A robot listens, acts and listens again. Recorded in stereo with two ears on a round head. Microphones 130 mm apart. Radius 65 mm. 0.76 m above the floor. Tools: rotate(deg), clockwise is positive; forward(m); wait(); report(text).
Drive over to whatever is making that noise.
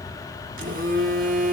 rotate(60)
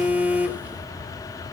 rotate(15)
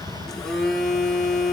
forward(1.0)
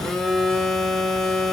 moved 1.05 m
forward(1.0)
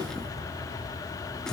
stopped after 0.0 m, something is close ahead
report("I am next to the phone buzzing.")